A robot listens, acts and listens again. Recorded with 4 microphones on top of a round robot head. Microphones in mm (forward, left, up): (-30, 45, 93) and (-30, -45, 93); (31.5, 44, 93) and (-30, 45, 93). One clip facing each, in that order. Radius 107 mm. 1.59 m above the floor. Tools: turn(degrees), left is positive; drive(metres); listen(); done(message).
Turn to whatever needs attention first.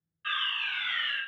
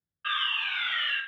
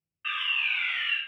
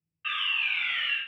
turn(degrees=-80)
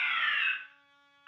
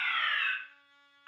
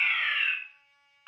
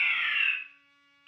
done("Found it: a fire alarm, straight ahead.")